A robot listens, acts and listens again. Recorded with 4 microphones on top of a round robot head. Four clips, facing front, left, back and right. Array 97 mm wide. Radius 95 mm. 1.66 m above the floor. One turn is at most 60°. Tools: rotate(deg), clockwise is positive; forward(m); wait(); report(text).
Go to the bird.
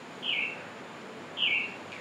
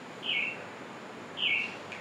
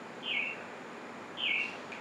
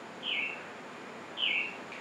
rotate(-35)
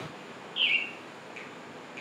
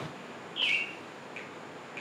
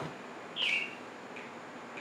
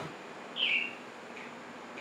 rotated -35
forward(1.0)
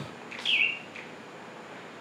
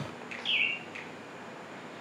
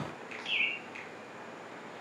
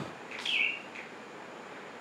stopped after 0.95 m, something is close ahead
report("Arrived at the bird, straight ahead.")